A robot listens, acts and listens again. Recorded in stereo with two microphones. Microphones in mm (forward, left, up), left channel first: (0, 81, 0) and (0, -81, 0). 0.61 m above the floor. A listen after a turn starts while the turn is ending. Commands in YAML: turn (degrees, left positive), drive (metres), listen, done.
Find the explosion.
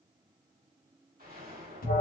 turn: -65
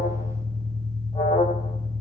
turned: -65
listen: true
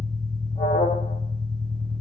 done: "I heard an explosion, but can't make it out now. It was about straight ahead or 50° right."